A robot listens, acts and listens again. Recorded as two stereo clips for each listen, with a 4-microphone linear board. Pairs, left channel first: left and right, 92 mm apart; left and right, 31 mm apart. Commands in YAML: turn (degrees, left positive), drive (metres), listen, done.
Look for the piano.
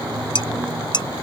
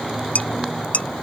listen: true
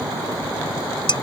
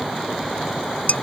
listen: true
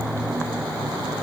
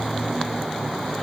done: "I can't make out a piano, only dishes clattering."